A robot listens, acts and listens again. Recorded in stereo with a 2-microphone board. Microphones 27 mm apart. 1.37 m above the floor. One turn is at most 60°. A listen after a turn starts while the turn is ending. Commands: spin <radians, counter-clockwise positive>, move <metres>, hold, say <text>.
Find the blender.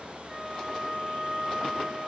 hold
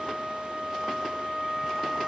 hold
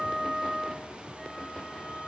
say I can't make out a blender to turn to.